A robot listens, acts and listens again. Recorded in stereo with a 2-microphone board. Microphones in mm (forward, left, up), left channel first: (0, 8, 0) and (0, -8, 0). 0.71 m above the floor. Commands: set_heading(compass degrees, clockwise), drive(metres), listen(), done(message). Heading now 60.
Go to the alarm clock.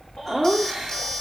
listen()
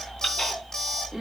set_heading(20)
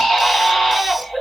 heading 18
listen()
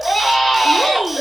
listen()
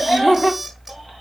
done("I heard an alarm clock, but can't make it out now. It was about straight ahead or 95° left. I did not reach it.")